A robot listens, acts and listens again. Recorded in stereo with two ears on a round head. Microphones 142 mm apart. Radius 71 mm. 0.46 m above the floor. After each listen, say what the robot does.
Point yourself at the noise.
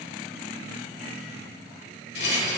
Turn 90° left.
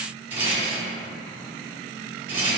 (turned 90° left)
Turn 15° right.
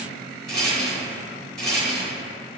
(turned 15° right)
Facing the rattle, 1 to 2 m away.